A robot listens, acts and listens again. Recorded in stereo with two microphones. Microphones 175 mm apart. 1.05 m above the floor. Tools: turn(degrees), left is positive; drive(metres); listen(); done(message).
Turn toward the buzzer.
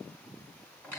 listen()
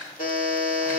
turn(degrees=55)
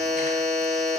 done("Facing the buzzer.")